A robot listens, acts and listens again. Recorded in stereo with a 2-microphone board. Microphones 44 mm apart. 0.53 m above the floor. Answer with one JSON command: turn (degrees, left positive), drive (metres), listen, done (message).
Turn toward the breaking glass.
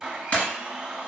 {"turn": 40}
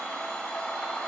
{"listen": true}
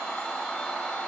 {"done": "I heard breaking glass, but can't make it out now. It was about straight ahead or 100° left."}